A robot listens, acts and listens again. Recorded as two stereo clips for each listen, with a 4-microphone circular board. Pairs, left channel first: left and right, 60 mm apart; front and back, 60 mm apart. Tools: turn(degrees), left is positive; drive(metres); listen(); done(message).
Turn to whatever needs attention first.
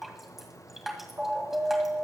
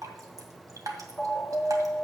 turn(degrees=-60)
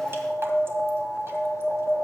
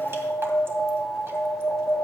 turn(degrees=-20)
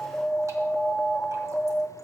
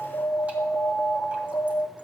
done("Found it: an alarm, straight ahead.")